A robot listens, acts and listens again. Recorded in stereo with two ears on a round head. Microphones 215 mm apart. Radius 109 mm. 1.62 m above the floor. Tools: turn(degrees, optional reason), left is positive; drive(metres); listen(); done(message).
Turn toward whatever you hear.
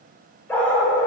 turn(degrees=30)
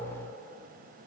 listen()
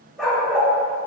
turn(degrees=30)
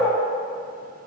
turn(degrees=30)
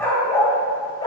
turn(degrees=20, reason="The dog barking: about 20° left or 160° left.")
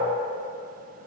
listen()
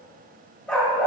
turn(degrees=30)
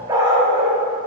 turn(degrees=-15, reason="So it is at 15° right.")
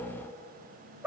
done("Facing the dog barking, 1 to 2 m away.")